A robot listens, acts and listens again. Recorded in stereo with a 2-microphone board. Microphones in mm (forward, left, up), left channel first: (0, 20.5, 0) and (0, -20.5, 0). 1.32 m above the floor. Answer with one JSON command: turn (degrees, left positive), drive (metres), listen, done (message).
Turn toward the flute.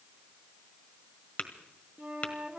{"turn": -35}
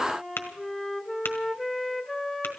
{"done": "Facing the flute, under 1 m away."}